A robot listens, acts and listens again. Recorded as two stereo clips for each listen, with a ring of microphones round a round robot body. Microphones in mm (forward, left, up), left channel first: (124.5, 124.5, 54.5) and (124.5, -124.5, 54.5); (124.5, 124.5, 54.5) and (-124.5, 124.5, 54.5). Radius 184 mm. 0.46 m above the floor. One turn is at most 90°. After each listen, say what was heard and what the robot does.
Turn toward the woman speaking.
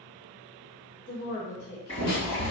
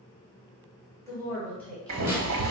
The woman speaking: 85° left. Turn 85° left.
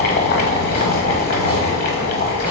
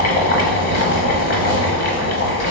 Keep listening.
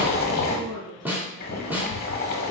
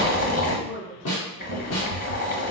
Facing the woman speaking, 2 to 4 m away.